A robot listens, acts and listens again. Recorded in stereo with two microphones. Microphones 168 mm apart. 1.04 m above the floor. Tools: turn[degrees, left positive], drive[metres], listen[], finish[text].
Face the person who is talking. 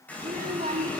Thought: The child speaking: about 55° right or 125° right.
Action: turn[-55]
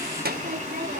Thought: So it is at 70° right.
Action: turn[-70]
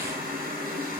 Action: listen[]
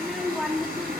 Action: finish[Facing the child speaking, 1 to 2 m away.]